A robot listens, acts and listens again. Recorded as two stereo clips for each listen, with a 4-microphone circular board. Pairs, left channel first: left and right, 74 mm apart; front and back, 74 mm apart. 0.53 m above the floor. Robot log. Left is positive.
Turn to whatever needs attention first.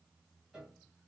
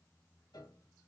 cmd idle
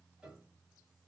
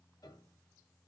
cmd idle
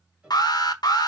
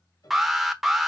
note: The alarm: 95° left.
cmd yaw +95
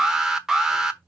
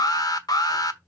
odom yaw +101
note: The alarm is now 10° right.
cmd yaw -10
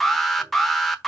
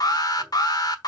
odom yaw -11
end: Found it: an alarm, straight ahead, 1 to 2 m away.